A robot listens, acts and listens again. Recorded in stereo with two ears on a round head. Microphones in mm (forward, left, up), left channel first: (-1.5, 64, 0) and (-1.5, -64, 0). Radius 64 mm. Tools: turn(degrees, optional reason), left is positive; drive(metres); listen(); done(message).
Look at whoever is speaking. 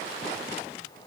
listen()
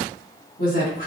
turn(degrees=60, reason="The woman speaking: about 60° left or 120° left.")
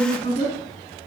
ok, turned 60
turn(degrees=55, reason="So it is at 55° left.")
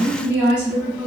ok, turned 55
turn(degrees=-10, reason="The woman speaking is now 10° right.")
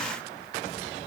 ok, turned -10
listen()
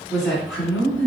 done("Found it: a woman speaking, straight ahead.")